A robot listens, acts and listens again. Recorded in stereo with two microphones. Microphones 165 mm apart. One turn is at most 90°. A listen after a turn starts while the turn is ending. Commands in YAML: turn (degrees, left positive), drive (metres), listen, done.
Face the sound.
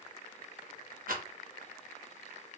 turn: -65
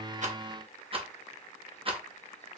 turn: -40
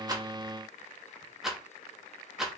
done: "Found it: a rattle, straight ahead, under 1 m away."